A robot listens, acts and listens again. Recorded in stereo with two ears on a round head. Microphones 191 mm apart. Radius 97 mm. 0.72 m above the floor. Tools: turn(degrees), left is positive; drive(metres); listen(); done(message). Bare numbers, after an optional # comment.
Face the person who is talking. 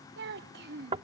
# The child speaking: about 45° right or 135° right.
turn(-45)
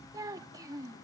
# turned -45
# So it is at 20° right.
turn(-20)
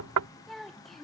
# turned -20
done("Facing the child speaking.")